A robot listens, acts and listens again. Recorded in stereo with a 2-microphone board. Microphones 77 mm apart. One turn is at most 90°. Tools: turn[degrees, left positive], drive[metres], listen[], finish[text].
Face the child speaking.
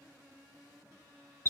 Action: listen[]
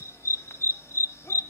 Action: listen[]
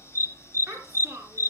Thought: The child speaking: about 40° right or 140° right.
Action: turn[-40]
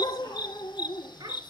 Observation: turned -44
Thought: So it is at 100° right.
Action: turn[-90]
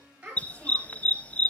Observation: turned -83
Thought: The child speaking is now 20° right.
Action: turn[-20]
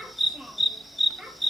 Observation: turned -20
Action: finish[Found it: a child speaking, straight ahead, over 4 m away.]